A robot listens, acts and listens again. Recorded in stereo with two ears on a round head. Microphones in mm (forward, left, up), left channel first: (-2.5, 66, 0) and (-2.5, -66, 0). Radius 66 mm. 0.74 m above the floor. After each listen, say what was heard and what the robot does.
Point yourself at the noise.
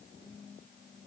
Keep listening.
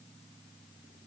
Keep listening.
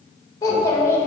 The child speaking: about 15° left or 165° left. Turn 15° left.
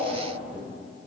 Turn 30° right.
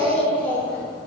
So it is at 10° left. Turn 10° left.
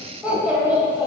The child speaking is now 15° right. Turn 15° right.
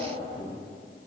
Facing the child speaking.